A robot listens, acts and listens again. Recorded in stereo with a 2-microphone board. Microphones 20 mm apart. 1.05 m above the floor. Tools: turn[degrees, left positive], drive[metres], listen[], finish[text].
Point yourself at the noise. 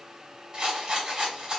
Thought: The rattle: about 35° right or 145° right.
Action: turn[-35]
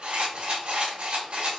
Thought: So it is at 115° right.
Action: turn[-115]
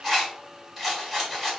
Action: finish[Facing the rattle, 2 to 4 m away.]